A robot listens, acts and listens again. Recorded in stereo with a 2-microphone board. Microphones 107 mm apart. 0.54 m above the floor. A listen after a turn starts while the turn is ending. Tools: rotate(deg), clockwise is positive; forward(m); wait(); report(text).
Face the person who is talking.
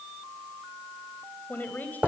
rotate(-15)
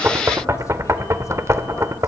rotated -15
wait()
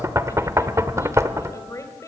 rotate(-150)
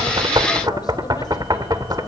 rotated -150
wait()
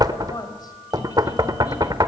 rotate(-40)
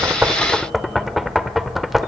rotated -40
wait()
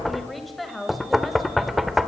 report("Facing the woman speaking.")